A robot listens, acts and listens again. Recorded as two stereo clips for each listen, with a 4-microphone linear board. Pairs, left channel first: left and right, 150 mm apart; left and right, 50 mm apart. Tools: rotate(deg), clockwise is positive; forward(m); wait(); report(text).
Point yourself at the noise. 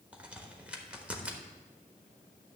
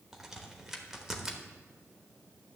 rotate(30)
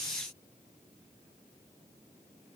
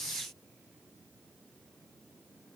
wait()
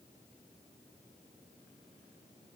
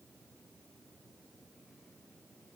report("I heard a crack, but can't make it out now. It was about 20° left or 140° right.")